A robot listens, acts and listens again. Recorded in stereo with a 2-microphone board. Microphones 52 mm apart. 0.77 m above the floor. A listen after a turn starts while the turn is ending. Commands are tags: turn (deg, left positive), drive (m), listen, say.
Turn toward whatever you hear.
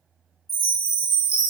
<turn deg="50"/>
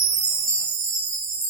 <say>Found it: a chime, straight ahead.</say>